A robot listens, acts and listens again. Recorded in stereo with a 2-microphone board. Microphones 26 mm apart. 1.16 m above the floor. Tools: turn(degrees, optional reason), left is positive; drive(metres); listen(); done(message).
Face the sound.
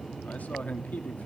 turn(degrees=90)
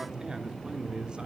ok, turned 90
turn(degrees=-35, reason="So it is at 35° right.")
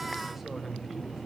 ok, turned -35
turn(degrees=-10, reason="The man speaking is now 10° right.")
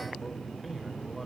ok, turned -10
listen()
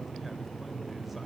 listen()
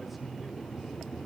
done("I heard a man speaking from this way, but can't make it out now.")